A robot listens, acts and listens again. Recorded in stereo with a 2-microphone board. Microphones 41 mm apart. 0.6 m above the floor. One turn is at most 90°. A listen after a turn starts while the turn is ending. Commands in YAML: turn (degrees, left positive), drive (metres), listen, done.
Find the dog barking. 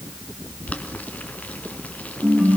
listen: true
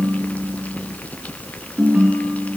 listen: true
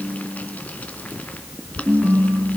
done: "I can't make out a dog barking to turn to."